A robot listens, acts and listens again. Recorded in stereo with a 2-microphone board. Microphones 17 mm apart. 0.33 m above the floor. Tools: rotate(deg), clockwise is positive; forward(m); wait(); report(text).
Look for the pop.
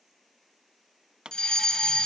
rotate(70)
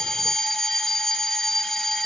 wait()
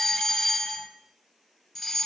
report("I heard a pop, but can't make it out now. It was about straight ahead or 40° right.")